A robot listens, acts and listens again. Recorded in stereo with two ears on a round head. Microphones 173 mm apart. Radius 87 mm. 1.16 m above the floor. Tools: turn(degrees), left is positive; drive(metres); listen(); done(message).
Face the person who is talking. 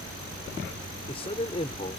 turn(degrees=30)
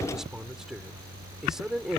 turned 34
done("Found it: a man speaking, straight ahead.")